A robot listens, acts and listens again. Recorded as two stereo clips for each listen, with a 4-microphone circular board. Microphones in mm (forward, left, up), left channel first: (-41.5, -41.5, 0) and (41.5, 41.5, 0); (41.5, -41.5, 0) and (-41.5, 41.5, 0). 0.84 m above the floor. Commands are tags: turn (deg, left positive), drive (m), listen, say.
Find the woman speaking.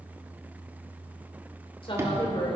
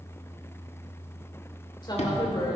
<turn deg="-95"/>
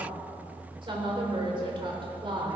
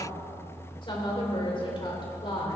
<say>Facing the woman speaking.</say>